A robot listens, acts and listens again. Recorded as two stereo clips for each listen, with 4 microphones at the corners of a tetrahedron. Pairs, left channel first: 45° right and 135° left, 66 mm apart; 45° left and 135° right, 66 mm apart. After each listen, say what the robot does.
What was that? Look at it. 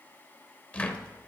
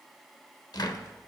Turn 25° left.
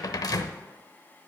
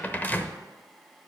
Turn 20° right.
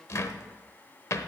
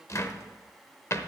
Facing the cupboard door.